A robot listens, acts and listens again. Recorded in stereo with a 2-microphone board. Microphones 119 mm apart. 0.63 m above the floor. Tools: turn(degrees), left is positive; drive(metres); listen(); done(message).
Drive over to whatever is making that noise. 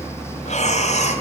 turn(degrees=70)
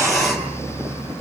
listen()
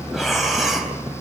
drive(metres=1.0)
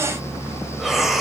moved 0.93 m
drive(metres=1.0)
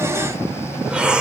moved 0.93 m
turn(degrees=-10)
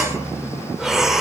drive(metres=1.0)
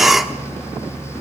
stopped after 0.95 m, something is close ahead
done("I am next to the breathing.")